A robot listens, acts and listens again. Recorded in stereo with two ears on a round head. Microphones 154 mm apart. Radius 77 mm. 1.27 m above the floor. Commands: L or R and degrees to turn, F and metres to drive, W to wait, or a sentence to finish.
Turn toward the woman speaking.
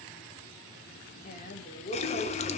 L40
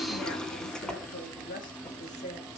L40
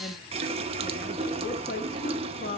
L130
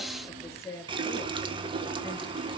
L15
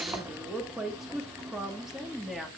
Facing the woman speaking.